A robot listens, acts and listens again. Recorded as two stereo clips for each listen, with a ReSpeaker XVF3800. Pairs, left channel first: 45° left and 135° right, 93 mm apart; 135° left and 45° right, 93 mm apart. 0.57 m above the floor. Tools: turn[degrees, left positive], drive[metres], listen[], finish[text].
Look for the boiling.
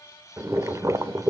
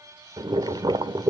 Thought: The boiling: 80° right.
Action: turn[-80]
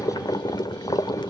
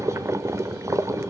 Thought: The boiling is now 10° left.
Action: turn[10]
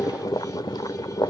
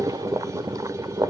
Action: finish[Facing the boiling, 1 to 2 m away.]